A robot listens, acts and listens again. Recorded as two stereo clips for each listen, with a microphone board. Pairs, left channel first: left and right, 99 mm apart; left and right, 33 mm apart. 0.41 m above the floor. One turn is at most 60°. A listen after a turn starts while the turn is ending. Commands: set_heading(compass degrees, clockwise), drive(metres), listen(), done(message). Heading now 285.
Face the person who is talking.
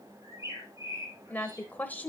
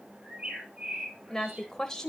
set_heading(270)
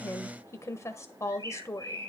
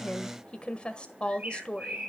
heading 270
set_heading(210)
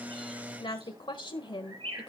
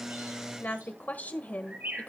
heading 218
set_heading(158)
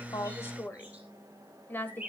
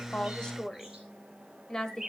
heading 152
set_heading(127)
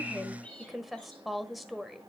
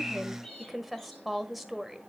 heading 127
done("Found it: a woman speaking, straight ahead.")